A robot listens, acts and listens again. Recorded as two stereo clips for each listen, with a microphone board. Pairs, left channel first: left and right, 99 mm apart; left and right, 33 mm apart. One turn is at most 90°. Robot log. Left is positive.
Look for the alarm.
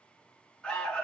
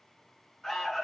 cmd yaw +30
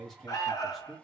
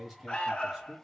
note: So it is at 140° left.
cmd yaw +90
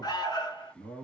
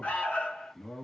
note: The alarm is now 55° left.
cmd yaw +55
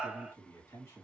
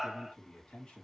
note: The alarm is now 10° right.
cmd yaw -10
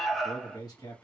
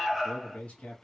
end: Facing the alarm.